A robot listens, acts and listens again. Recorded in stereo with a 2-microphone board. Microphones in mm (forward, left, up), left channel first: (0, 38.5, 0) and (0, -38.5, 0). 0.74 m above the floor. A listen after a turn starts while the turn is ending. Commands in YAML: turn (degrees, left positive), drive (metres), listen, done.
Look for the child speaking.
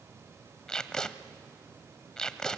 listen: true
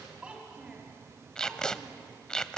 turn: -15
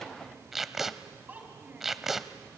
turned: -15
turn: -25
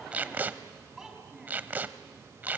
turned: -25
turn: -30
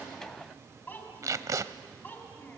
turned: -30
turn: 25
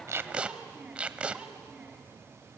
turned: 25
turn: -15
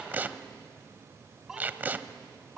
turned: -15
done: "Facing the child speaking, over 4 m away."